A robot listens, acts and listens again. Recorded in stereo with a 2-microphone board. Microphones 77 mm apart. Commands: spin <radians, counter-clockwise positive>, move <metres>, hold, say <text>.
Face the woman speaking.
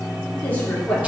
spin 0.26
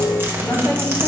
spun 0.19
spin 0.26
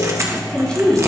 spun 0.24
spin 0.52
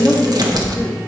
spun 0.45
spin 0.52
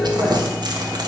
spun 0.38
hold
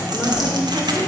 hold
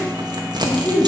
spin 0.52
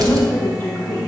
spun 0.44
spin 2.53
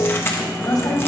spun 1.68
spin 0.87
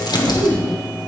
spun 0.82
say Found it: a woman speaking, straight ahead, 2 to 4 m away.